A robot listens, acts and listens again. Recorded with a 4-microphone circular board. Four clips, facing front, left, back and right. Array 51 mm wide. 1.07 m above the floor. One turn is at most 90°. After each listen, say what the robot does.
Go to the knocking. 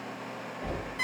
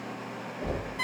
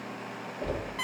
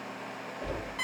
Turn 90° left.
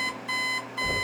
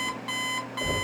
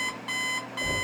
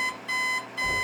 Turn 90° left.
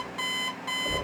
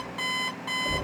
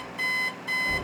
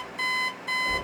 Turn 20° left.
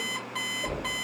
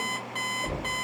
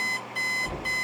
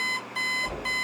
Turn 10° left.
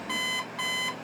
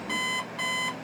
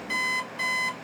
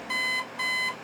Keep listening.
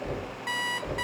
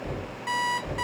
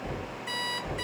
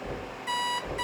Drive 1.0 m forward.
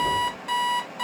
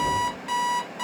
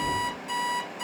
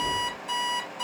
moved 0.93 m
Turn 10° right.
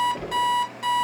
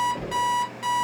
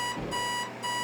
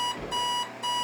Drive 1.0 m forward.
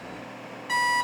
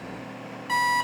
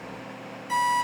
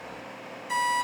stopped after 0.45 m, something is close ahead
Keep listening.
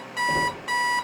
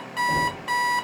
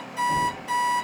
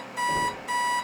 Arrived at the knocking, straight ahead.